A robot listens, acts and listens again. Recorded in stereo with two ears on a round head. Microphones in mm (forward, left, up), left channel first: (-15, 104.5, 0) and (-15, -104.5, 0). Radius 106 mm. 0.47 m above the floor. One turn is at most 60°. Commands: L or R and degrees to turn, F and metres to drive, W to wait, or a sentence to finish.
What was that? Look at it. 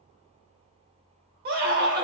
R40
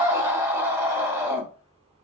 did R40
R15
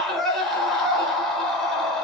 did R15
Facing the scream.